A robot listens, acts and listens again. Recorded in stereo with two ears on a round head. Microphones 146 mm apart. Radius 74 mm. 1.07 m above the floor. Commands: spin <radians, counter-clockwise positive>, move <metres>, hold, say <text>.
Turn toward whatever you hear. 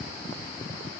hold
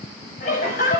spin 0.87
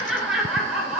say Found it: laughter, straight ahead, over 4 m away.